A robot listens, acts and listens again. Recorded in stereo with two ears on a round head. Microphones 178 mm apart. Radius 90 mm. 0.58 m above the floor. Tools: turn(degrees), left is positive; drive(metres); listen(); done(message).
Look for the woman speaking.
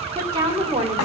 turn(degrees=-15)
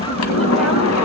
listen()
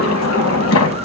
listen()
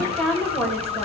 turn(degrees=30)
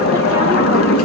listen()
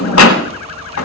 listen()
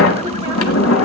done("I heard a woman speaking, but can't make it out now. It was about 25° right or 145° left.")